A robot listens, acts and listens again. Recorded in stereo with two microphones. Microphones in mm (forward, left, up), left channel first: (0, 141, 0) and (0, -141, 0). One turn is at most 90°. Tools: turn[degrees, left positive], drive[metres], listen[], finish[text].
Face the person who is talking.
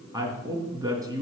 Action: turn[-30]
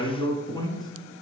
Thought: So it is at 15° left.
Action: turn[15]
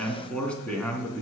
Action: finish[Found it: a woman speaking, straight ahead.]